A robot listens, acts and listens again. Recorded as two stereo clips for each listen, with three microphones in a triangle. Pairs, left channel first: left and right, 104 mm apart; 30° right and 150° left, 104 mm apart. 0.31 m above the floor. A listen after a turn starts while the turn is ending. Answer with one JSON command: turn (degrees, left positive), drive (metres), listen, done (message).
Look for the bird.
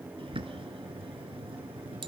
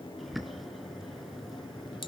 {"turn": -120}
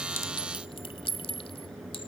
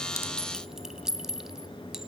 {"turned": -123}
{"done": "Found it: a bird, straight ahead."}